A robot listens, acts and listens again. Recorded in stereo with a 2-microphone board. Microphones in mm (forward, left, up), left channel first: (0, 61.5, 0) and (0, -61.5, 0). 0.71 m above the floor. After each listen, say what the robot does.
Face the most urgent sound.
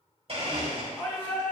Turn 20° left.
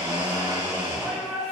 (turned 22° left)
Facing the shout.